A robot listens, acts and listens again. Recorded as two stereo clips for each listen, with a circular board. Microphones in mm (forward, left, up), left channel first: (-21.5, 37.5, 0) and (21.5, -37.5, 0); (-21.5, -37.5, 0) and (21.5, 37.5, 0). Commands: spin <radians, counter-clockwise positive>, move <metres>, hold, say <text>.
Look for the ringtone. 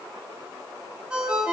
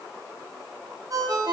spin 0.35
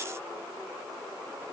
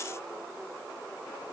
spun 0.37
hold
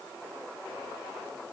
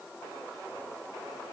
hold
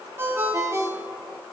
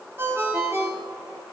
say Found it: a ringtone, straight ahead.